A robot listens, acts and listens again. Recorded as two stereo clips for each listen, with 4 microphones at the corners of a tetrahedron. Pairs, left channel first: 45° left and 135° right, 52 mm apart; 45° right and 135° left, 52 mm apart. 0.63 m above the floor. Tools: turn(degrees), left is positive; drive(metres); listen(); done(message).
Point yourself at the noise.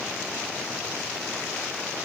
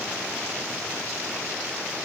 listen()
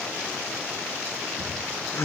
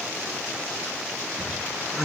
turn(degrees=55)
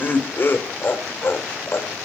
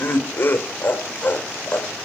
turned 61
turn(degrees=10)
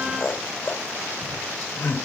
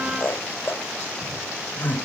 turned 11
done("Found it: laughter, straight ahead, 2 to 4 m away.")